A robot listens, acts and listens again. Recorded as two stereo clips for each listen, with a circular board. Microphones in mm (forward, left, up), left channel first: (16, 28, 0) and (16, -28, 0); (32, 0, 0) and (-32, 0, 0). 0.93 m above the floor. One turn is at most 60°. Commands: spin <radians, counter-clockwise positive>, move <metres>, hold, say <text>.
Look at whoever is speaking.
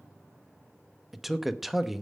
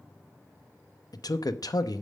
say Found it: a man speaking, straight ahead, under 1 m away.